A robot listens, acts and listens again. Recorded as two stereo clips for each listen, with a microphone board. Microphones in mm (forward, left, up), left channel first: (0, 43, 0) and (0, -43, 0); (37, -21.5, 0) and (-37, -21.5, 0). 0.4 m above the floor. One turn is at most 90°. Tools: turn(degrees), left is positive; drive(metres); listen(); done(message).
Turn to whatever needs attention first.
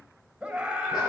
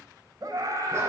turn(degrees=-90)
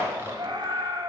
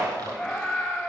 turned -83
turn(degrees=-85)
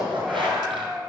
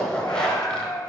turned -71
turn(degrees=-15)
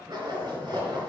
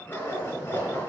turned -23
turn(degrees=10)
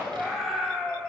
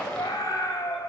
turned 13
done("Found it: a scream, straight ahead.")